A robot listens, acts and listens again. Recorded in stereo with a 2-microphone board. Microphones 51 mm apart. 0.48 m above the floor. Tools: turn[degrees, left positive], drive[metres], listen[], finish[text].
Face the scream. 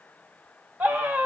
Thought: The scream: about 35° right or 145° right.
Action: turn[-35]
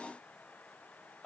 Action: finish[Facing the scream, 1 to 2 m away.]